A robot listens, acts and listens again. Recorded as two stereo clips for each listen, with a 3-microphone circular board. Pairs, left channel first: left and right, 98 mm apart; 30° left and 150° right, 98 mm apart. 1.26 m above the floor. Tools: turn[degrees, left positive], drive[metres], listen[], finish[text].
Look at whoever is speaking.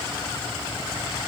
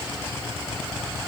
Action: listen[]
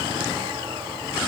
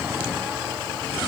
Action: listen[]
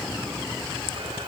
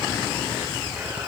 Action: finish[I can't make out anyone speaking to turn to.]